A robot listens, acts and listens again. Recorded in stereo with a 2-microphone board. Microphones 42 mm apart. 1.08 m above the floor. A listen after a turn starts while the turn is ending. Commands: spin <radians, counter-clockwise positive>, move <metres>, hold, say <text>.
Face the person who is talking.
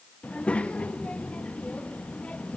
spin 0.52
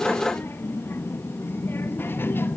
spin 2.09
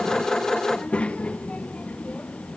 spin 0.52
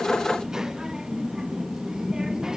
spin -0.26
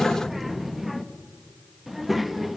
say Found it: a child speaking, straight ahead, under 1 m away.